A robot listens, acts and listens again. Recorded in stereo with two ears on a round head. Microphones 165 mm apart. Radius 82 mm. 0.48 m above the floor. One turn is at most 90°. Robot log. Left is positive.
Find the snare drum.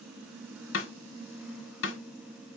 cmd yaw +90
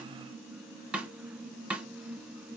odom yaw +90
end: Found it: a snare drum, straight ahead.